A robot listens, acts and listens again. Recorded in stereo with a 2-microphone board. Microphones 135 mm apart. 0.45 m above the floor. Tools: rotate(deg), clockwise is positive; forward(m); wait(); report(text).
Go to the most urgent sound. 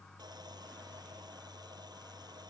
wait()
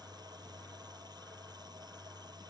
wait()
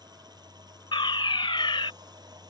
rotate(-35)
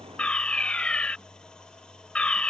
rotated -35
rotate(-10)
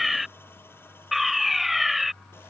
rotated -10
forward(1.0)
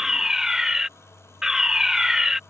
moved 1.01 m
forward(1.0)
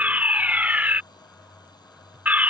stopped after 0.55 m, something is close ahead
rotate(25)
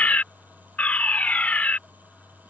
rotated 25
rotate(-20)
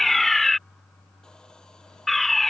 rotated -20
report("I am next to the fire alarm.")